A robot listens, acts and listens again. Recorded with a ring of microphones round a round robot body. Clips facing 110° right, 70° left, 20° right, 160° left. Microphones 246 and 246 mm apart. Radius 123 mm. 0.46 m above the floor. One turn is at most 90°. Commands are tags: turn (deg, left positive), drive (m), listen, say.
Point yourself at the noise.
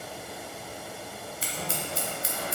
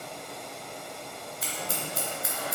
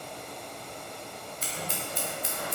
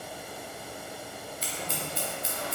<turn deg="-55"/>
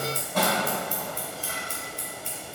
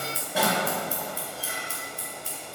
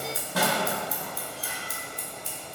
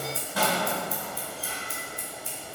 <turn deg="-15"/>
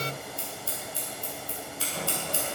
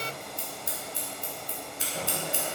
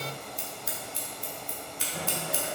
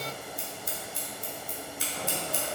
<say>Found it: scissors, straight ahead, 1 to 2 m away.</say>